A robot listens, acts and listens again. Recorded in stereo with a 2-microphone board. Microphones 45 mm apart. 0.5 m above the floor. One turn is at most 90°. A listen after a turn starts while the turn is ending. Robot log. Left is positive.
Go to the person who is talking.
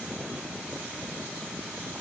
cmd idle
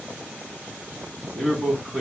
note: The man speaking: about 20° left or 160° left.
cmd yaw +20
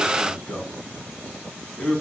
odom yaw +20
note: So it is at 135° left.
cmd yaw +90
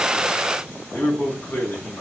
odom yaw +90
note: The man speaking is now 45° left.
cmd yaw +45
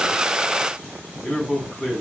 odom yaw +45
cmd fwd 1.0
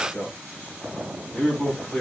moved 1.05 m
note: The man speaking is now 15° left.
cmd yaw +15
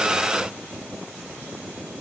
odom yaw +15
cmd idle
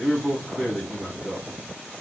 cmd fwd 1.0
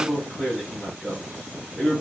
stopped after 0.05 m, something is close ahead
end: Arrived at the man speaking, straight ahead.